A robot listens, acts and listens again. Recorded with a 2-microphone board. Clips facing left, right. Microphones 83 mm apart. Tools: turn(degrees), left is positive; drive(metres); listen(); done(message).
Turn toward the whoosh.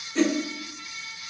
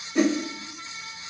turn(degrees=-30)
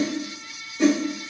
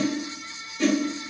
turn(degrees=15)
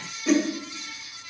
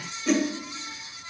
done("Found it: a whoosh, straight ahead, under 1 m away.")